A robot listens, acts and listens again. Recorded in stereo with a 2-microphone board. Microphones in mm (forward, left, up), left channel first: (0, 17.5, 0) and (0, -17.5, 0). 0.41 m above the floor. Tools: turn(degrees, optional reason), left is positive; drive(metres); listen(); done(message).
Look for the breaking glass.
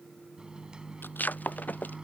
turn(degrees=55, reason="The breaking glass: about 55° left or 125° left.")
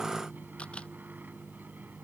listen()
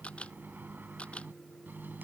done("I heard breaking glass, but can't make it out now. It was about straight ahead or 70° left.")